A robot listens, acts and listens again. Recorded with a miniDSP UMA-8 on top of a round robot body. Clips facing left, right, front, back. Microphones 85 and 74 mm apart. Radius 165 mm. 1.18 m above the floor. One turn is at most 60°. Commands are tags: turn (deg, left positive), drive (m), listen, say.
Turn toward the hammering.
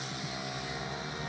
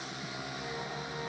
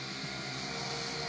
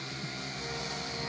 <listen/>
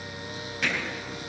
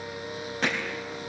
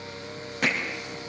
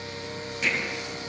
<turn deg="-40"/>
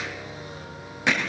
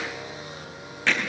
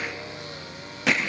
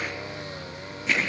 <turn deg="15"/>
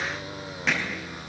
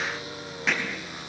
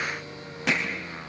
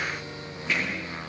<say>Facing the hammering, 2 to 4 m away.</say>